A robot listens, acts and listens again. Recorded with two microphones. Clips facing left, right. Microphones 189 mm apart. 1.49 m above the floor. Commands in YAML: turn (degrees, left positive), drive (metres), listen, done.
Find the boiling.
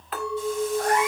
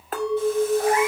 listen: true
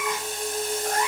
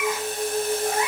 listen: true
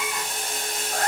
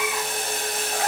turn: -55
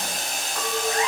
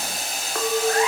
done: "Facing the boiling, 2 to 4 m away."